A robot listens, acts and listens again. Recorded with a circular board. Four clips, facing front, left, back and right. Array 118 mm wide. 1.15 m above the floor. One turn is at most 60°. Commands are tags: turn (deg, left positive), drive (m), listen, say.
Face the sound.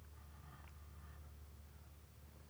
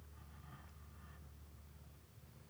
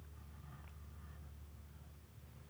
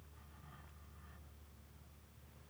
<listen/>
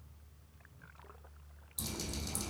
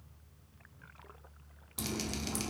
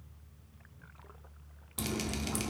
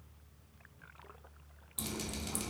<turn deg="60"/>
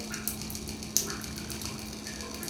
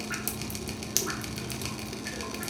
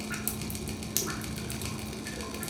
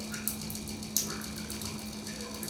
<turn deg="60"/>
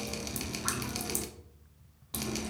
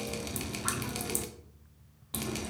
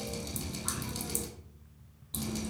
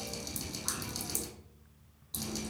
<turn deg="45"/>
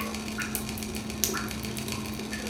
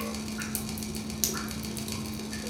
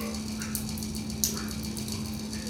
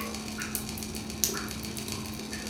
<say>Found it: dripping, straight ahead, 1 to 2 m away.</say>